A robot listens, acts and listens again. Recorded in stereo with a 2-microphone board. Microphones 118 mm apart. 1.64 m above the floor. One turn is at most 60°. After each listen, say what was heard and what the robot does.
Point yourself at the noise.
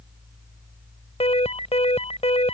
The alarm: about 60° left or 120° left. Turn 60° left.
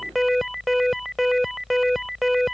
Found it: an alarm, straight ahead.